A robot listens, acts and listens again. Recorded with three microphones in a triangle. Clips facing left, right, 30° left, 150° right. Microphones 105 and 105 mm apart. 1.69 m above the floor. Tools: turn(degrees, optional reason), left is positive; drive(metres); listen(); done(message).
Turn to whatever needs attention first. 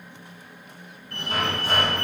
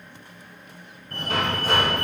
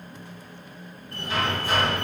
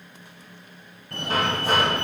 turn(degrees=-135, reason="The fire alarm: 135° right.")
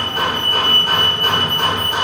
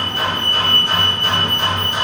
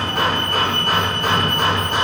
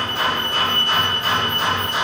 turn(degrees=35, reason="The fire alarm is now 35° left.")
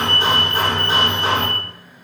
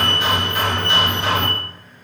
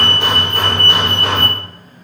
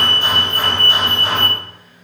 done("Facing the fire alarm, 2 to 4 m away.")